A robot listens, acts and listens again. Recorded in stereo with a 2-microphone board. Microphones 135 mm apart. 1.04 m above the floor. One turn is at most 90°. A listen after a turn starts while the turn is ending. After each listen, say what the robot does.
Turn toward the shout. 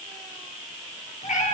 Keep listening.
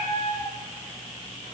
Keep listening.
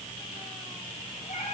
I can't make out a shout, only a cat meowing.